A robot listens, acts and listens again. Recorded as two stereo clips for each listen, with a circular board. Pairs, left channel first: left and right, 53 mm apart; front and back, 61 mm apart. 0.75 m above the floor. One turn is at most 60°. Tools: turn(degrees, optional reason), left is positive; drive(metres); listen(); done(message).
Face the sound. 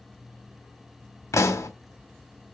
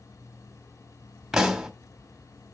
turn(degrees=60, reason="The pop: 95° left.")
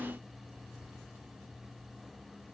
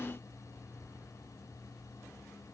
turn(degrees=35, reason="Nothing new. It was at 35° left.")
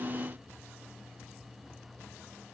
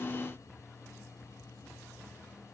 done("I heard a pop from this way, but can't make it out now.")